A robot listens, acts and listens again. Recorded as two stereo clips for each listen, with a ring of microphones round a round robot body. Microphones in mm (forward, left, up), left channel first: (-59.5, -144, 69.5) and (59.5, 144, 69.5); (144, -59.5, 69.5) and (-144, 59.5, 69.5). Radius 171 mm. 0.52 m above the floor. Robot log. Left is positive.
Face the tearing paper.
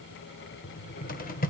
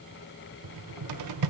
cmd idle
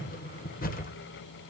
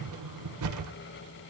cmd idle
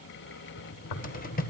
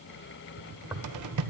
note: The tearing paper: 120° right.
cmd yaw -120
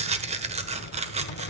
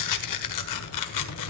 end: Found it: tearing paper, straight ahead, 1 to 2 m away.